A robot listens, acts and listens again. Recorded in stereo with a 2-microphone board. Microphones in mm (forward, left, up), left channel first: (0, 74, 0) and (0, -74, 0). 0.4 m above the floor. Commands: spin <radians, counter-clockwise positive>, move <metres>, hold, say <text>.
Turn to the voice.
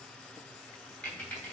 hold
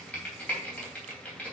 hold
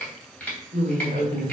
spin -1.05
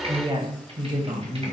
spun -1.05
spin -0.52
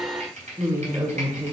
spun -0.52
spin -0.35
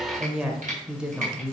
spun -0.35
say Facing the woman speaking, 1 to 2 m away.